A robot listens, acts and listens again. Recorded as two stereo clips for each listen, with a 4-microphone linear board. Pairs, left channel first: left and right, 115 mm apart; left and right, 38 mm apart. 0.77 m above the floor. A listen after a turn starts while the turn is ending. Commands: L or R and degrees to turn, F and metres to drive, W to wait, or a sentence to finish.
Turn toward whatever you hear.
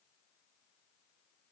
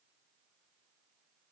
W
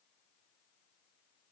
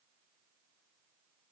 W
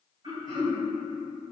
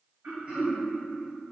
R45
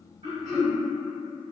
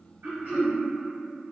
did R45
R90
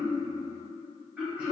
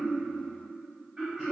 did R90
Facing the throat clearing.